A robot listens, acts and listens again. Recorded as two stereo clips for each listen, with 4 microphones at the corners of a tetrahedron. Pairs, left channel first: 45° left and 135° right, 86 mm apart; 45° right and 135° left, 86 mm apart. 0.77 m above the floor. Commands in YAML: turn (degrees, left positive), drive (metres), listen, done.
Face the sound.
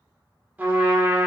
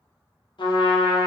turn: -65
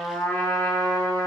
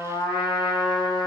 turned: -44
turn: -20
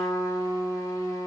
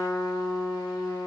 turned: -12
done: "Found it: a trumpet, straight ahead."